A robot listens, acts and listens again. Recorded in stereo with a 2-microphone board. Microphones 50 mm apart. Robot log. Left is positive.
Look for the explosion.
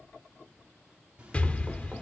note: The explosion: about 25° left or 155° left.
cmd yaw +25
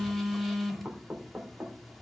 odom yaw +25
cmd idle
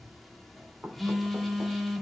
end: I heard an explosion, but can't make it out now. It was about straight ahead or 130° left.